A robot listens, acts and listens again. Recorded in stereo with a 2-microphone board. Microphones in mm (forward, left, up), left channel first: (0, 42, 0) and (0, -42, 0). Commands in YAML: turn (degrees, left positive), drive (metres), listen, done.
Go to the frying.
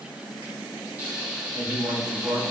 turn: -20
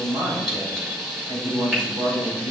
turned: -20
drive: 1.0
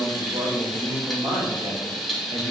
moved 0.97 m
drive: 1.0
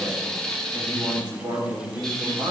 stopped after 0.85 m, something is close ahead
turn: 10
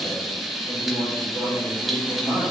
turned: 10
done: "I am next to the frying."